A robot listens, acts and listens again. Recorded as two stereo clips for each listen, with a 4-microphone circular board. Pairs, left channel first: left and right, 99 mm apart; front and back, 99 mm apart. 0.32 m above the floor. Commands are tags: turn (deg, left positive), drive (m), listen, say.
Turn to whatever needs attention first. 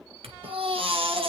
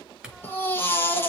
<turn deg="-65"/>
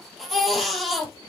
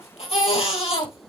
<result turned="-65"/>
<say>Found it: a baby crying, straight ahead.</say>